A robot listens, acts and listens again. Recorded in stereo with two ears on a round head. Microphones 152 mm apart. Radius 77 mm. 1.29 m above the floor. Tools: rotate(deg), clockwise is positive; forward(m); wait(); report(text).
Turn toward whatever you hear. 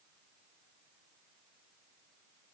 wait()
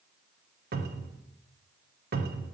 rotate(60)
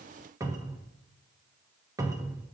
rotate(20)
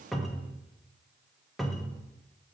report("Facing the cupboard door, under 1 m away.")